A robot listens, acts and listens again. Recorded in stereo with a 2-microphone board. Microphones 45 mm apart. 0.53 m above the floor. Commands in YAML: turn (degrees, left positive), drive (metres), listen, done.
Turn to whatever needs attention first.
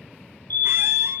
turn: 50
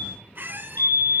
turn: 75
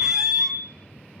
turn: 40
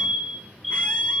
done: "Found it: a fire alarm, straight ahead."